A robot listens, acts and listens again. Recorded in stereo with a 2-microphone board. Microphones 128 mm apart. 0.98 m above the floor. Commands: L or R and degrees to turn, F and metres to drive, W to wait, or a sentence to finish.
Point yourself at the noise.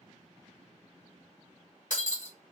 L75
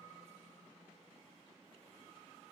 W
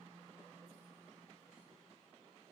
I heard breaking glass, but can't make it out now. It was about straight ahead or 30° left.